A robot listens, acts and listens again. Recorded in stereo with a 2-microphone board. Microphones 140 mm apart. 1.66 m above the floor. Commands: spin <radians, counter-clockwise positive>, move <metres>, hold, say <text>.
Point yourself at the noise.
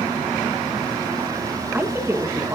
spin -0.44
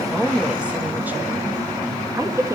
spin -0.35
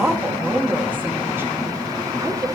spin -0.35
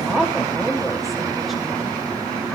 say Found it: a woman speaking, straight ahead, 2 to 4 m away.